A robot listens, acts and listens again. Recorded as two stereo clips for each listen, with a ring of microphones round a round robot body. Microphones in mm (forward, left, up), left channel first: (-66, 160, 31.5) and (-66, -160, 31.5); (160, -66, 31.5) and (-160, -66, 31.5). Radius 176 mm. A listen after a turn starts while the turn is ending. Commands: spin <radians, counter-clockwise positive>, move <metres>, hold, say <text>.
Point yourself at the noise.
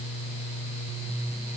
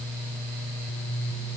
hold
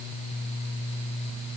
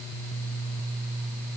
hold
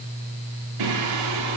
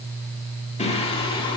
spin -1.31
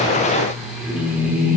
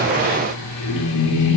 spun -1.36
say Facing the singing.